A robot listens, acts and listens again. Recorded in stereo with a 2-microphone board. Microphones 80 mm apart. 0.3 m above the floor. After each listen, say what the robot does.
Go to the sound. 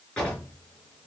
Turn 30° left.
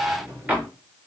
Turn 20° right.
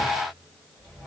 Keep listening.
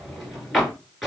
Drive 1.0 m forward.
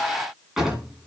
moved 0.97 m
Drive 1.0 m forward.
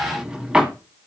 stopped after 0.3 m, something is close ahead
Turn 10° right.
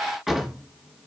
Arrived at the drawer, straight ahead.